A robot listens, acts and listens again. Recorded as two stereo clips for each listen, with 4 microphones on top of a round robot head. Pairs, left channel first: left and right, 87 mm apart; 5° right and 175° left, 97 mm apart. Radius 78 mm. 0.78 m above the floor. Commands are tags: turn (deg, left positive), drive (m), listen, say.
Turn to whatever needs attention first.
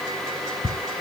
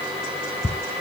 <listen/>
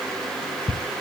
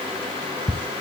<listen/>
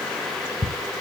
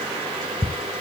<say>I can't make out anything urgent to turn to.</say>